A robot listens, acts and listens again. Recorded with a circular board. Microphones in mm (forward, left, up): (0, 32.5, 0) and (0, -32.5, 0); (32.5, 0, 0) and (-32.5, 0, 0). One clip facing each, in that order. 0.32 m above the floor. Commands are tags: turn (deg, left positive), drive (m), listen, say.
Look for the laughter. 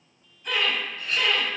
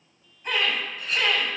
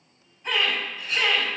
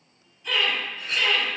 <turn deg="-50"/>
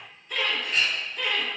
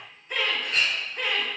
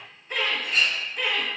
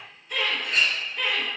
<turn deg="-80"/>
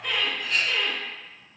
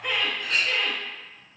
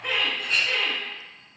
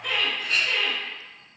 <turn deg="-70"/>
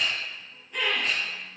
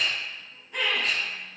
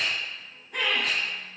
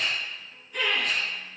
<turn deg="-15"/>
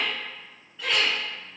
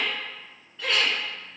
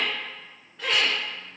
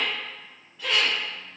<say>Facing the laughter, 2 to 4 m away.</say>